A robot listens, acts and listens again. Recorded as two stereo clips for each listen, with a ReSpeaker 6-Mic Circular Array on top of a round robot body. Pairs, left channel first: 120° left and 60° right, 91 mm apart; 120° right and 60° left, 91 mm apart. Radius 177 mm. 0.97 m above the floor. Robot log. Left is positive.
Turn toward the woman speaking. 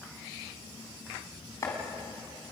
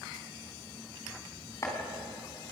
cmd idle
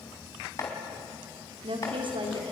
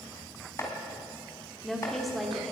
note: The woman speaking: 30° right.
cmd yaw -30
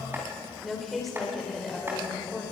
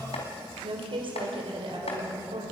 note: The woman speaking is now 30° left.
cmd yaw +30
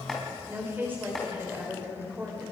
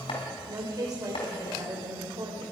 note: The woman speaking is now 10° left.
cmd yaw +10
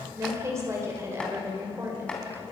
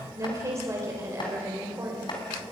end: Facing the woman speaking, 2 to 4 m away.